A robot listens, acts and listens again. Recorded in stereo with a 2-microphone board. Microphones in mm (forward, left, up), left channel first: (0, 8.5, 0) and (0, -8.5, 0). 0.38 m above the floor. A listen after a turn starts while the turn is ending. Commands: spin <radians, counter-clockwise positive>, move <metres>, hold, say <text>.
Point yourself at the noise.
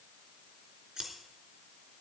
spin -0.87
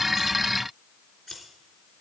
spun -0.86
say Facing the scissors, 2 to 4 m away.